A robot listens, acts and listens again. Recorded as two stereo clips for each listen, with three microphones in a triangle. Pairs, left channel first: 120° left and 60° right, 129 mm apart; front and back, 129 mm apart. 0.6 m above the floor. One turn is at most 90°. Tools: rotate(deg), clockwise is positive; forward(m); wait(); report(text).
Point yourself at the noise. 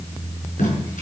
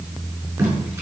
rotate(-90)
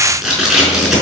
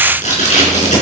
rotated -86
rotate(-25)
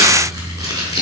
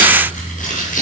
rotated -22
report("Facing the tape being pulled.")